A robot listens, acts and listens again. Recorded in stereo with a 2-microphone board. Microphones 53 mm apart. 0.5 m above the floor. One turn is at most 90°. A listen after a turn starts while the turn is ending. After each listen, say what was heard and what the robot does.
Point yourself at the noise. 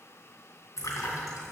Turn 90° left.
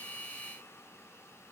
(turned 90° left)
Facing where the splash came from. I can't hear it now.